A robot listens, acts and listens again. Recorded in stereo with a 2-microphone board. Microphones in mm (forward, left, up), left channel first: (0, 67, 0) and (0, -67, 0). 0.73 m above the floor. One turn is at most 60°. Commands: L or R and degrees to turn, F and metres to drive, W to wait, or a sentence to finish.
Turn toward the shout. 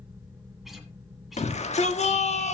L55
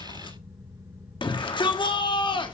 L45
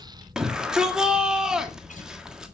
Found it: a shout, straight ahead, 1 to 2 m away.